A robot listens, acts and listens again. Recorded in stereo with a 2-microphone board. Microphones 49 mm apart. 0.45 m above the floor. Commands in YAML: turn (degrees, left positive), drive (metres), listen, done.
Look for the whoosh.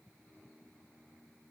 listen: true
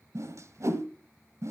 turn: -70
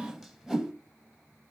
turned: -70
done: "Facing the whoosh."